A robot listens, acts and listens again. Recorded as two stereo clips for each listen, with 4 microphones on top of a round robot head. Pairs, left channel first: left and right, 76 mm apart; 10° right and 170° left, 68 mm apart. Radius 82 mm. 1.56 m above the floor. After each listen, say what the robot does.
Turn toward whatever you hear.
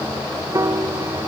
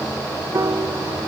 Turn 135° right.
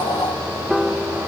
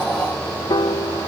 Facing the piano.